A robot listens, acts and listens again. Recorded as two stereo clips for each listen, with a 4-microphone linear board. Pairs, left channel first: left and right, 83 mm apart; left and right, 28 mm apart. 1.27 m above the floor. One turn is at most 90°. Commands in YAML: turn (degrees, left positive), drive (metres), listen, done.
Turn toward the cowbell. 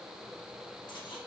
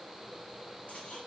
listen: true
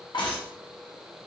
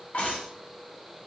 listen: true
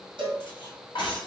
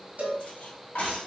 turn: -75
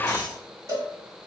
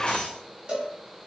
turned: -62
turn: -35
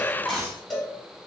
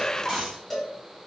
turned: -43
turn: 10
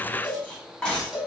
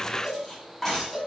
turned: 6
done: "Facing the cowbell, 1 to 2 m away."